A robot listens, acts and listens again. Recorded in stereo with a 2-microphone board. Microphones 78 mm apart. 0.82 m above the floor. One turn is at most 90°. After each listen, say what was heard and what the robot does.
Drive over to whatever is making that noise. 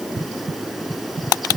Keep listening.
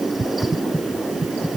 Keep listening.
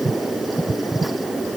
I can't make out anything to turn to.